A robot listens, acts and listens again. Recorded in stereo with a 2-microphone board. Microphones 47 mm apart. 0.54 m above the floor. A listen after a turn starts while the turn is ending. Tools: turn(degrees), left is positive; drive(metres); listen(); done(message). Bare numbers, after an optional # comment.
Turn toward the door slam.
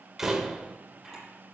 turn(-30)
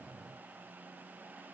listen()
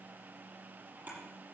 done("I heard a door slam, but can't make it out now. It was about 20° left or 140° right.")